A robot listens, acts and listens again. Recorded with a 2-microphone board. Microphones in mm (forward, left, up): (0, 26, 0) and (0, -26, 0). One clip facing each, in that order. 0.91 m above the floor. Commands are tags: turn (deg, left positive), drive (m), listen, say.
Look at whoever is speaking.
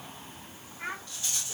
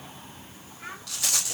<turn deg="40"/>
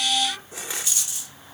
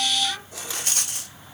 <listen/>
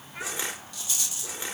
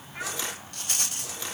<say>Found it: a child speaking, straight ahead.</say>